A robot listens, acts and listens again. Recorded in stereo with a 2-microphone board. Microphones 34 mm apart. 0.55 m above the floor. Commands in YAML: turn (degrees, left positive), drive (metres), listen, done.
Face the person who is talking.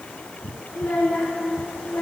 turn: 90
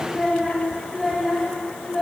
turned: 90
done: "Facing the child speaking."